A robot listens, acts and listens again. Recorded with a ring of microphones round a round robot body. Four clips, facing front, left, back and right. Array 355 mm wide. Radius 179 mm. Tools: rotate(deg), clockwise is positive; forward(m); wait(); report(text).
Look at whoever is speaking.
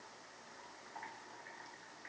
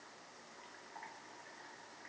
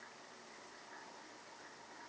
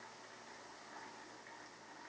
wait()
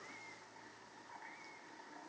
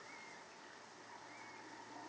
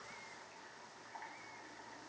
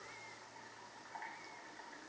wait()
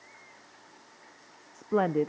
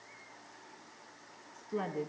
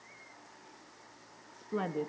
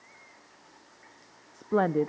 rotate(55)
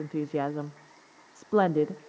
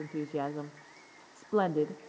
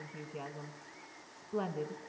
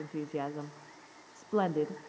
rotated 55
report("Facing the woman speaking, under 1 m away.")